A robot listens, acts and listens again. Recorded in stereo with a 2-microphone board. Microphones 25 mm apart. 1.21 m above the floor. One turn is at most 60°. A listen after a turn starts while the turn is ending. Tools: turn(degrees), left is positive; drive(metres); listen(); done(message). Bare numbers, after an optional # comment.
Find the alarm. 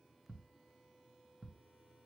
listen()
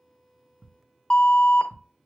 # The alarm: about 40° left or 140° left.
turn(40)
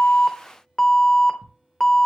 # So it is at 10° left.
turn(10)
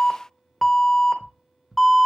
done("Facing the alarm, under 1 m away.")